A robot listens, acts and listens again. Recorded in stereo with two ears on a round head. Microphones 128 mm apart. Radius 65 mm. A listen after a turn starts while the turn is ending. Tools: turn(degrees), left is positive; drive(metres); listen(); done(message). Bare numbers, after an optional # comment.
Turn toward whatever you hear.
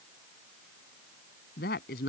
# The woman speaking: about 75° left or 105° left.
turn(75)
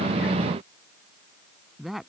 done("Found it: a woman speaking, straight ahead.")